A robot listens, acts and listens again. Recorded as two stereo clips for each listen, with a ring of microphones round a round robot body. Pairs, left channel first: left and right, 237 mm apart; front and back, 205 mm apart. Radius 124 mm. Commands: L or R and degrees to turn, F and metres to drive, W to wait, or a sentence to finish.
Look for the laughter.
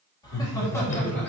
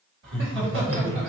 L175
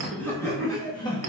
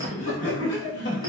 L25
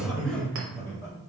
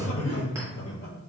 L15
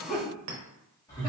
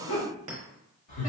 L15
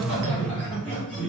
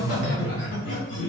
Found it: laughter, straight ahead.